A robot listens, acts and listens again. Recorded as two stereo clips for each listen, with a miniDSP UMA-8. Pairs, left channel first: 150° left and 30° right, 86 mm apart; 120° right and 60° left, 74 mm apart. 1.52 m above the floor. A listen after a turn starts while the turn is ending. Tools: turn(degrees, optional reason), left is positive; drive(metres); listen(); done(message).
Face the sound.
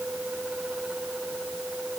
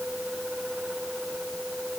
listen()
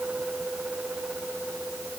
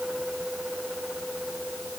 listen()
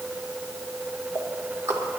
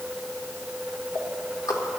turn(degrees=-85, reason="The ticking: 85° right.")
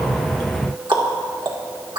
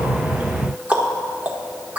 turn(degrees=-10, reason="The ticking is now 10° right.")
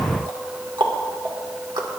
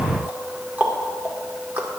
done("Facing the ticking.")